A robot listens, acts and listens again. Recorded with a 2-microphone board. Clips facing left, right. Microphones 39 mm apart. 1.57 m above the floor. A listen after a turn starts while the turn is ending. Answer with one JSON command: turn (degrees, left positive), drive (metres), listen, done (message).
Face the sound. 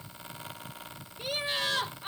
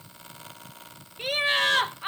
{"turn": -65}
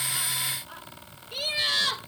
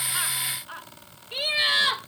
{"turn": -25}
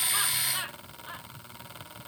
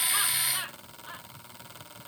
{"done": "Found it: laughter, straight ahead."}